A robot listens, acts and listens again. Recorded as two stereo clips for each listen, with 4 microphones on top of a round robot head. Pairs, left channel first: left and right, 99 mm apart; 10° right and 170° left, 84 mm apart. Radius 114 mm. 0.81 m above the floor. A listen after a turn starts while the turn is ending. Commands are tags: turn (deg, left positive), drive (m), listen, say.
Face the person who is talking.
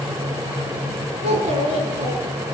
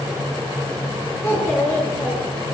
<turn deg="-80"/>
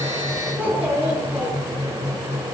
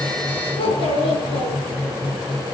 <turn deg="-15"/>
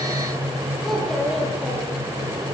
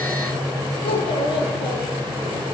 <say>Facing the child speaking, over 4 m away.</say>